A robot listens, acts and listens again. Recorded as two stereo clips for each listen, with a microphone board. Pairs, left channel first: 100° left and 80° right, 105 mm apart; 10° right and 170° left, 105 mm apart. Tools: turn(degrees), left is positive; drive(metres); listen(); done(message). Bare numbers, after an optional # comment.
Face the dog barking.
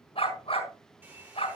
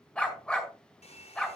# The dog barking: 70° left.
turn(70)
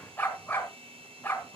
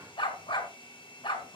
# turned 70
# The dog barking is now 30° left.
turn(30)
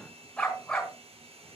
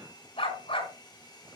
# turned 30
# The dog barking is now 20° left.
turn(20)
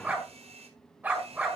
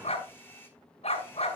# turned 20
done("Facing the dog barking, over 4 m away.")